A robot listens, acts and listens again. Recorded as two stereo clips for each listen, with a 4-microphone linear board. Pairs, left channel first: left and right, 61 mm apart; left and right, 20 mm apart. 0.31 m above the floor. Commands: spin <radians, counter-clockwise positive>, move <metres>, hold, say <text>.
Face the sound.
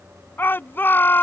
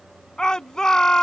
spin 0.61
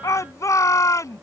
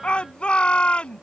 spin 1.83
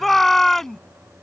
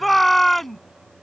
say Found it: a shout, straight ahead.